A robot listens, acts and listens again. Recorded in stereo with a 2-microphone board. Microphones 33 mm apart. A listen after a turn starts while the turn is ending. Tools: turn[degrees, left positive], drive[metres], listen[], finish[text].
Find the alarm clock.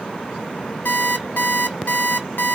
Action: turn[90]
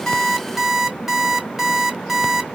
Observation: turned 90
Action: finish[Facing the alarm clock, 1 to 2 m away.]